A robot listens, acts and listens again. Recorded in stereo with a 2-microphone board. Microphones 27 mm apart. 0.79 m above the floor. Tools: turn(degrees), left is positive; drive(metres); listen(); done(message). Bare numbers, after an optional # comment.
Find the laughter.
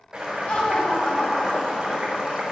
# The laughter: about 50° left or 130° left.
turn(50)
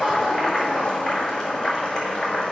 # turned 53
listen()
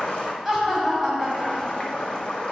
done("Found it: laughter, straight ahead.")